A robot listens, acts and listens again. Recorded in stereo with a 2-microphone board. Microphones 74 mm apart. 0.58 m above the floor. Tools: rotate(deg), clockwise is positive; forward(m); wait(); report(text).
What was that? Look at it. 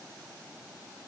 wait()
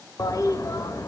rotate(-50)
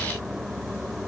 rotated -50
report("Facing the toilet flushing, under 1 m away.")